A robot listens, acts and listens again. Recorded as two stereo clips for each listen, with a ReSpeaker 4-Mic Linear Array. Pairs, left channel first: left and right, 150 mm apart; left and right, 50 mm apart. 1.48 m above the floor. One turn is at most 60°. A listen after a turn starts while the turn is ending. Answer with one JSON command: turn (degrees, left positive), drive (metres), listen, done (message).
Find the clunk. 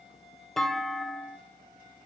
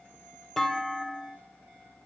{"turn": 30}
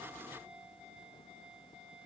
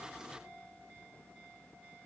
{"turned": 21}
{"listen": true}
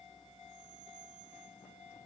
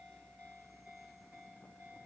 {"done": "I heard a clunk, but can't make it out now. It was about 20° right or 155° left."}